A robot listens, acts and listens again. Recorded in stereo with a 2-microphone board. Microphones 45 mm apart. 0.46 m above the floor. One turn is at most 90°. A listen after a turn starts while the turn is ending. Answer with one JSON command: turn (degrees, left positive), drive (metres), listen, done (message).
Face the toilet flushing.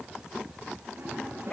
{"turn": -60}
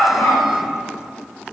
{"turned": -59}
{"listen": true}
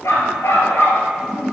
{"done": "Found it: a toilet flushing, straight ahead, over 4 m away."}